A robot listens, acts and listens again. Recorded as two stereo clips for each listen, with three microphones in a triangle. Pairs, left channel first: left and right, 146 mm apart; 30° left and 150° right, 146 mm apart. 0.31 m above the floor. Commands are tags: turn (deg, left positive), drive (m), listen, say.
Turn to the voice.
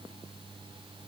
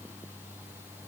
<listen/>
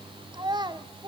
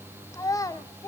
<turn deg="-35"/>
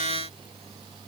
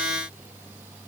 <listen/>
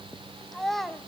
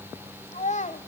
<say>Facing the child speaking.</say>